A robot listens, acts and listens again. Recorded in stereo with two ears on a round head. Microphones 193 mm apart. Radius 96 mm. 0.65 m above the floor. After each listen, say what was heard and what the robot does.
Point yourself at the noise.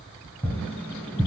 Turn 30° left.
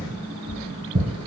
So it is at 25° right. Turn 25° right.
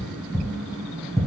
Found it: tapping, straight ahead, 2 to 4 m away.